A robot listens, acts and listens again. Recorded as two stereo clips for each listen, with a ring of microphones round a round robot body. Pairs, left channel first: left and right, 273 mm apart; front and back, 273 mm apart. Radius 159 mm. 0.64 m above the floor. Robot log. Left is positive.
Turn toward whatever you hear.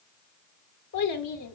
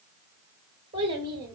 note: The child speaking: 100° left.
cmd yaw +100
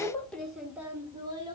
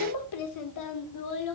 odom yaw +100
note: The child speaking is now 15° right.
cmd yaw -15
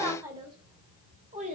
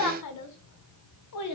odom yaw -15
note: The child speaking is now 25° right.
cmd yaw -25
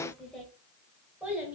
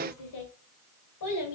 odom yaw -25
end: Facing the child speaking.